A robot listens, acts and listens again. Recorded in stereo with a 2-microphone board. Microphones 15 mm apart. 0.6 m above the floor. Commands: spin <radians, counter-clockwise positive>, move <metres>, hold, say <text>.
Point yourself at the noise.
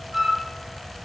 spin -0.35
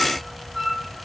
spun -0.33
say Facing the flute.